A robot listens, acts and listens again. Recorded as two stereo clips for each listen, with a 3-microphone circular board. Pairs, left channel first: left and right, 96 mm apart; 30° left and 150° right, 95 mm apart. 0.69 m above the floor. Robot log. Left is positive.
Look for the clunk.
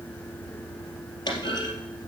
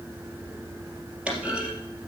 note: The clunk: 130° left.
cmd yaw +130
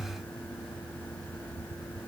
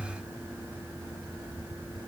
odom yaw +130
end: I heard a clunk from this way, but can't make it out now.